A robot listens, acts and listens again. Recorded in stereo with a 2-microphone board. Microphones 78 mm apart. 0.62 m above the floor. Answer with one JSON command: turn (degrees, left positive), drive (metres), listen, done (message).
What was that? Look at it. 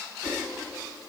{"listen": true}
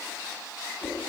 {"turn": 25}
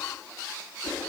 {"listen": true}
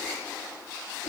{"listen": true}
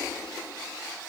{"done": "I heard a whoosh, but can't make it out now. It was about straight ahead or 130° left."}